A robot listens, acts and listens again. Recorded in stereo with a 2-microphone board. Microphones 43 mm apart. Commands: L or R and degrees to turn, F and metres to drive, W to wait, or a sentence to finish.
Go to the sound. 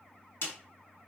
L90
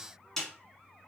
L10
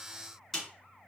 F1.0
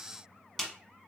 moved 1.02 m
F1.0
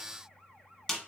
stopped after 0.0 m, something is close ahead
Arrived at the snare drum, straight ahead.